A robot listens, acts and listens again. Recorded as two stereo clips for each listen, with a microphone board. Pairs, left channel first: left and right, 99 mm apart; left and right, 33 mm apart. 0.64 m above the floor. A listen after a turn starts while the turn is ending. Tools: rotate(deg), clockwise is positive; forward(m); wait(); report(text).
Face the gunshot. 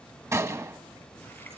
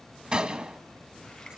rotate(30)
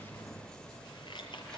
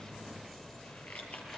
wait()
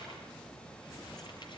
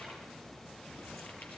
report("I heard a gunshot, but can't make it out now. It was about straight ahead or 120° right.")